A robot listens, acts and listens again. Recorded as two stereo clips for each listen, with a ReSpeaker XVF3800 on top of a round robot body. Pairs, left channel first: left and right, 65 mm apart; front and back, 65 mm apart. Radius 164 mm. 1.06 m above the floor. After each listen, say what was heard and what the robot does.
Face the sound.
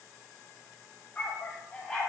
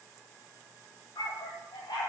The dog barking: 10° left. Turn 10° left.
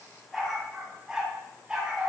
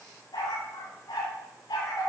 The dog barking is now 20° right. Turn 20° right.
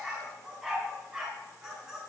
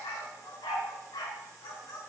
The dog barking is now 10° right. Turn 10° right.
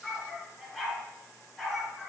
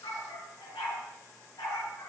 Facing the dog barking, over 4 m away.